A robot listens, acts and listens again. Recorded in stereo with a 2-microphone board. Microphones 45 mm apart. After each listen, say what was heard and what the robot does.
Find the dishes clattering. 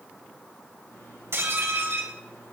The dishes clattering: about 70° right or 110° right. Turn 70° right.
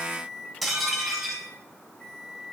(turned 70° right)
Facing the dishes clattering.